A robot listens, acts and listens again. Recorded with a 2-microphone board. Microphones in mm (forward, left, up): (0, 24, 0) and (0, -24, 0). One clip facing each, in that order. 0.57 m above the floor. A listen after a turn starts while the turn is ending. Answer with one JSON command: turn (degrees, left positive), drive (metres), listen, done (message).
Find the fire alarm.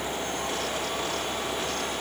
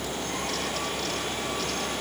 {"listen": true}
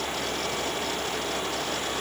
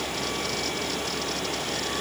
{"listen": true}
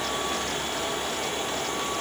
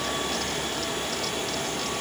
{"done": "I can't make out a fire alarm to turn to."}